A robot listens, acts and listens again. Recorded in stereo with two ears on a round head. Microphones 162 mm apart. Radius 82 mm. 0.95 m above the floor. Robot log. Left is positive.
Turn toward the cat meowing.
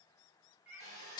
note: The cat meowing: about 15° right or 165° right.
cmd yaw -15
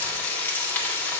cmd idle
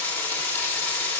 cmd idle
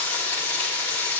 end: I heard a cat meowing, but can't make it out now. It was about straight ahead or 150° right.